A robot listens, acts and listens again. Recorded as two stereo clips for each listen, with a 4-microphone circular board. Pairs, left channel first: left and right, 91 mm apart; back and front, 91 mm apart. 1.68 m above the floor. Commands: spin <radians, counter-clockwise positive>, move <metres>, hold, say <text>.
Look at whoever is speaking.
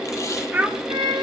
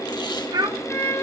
spin -0.44
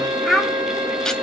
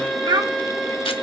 say Facing the child speaking, under 1 m away.